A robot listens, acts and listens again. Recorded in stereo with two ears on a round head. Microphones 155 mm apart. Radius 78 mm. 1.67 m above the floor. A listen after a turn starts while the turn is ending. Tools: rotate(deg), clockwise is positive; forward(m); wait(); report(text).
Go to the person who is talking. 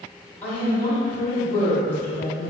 rotate(-30)
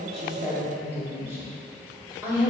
rotate(15)
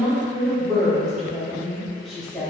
forward(1.0)
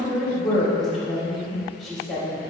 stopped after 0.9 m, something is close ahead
report("Arrived at the woman speaking, straight ahead.")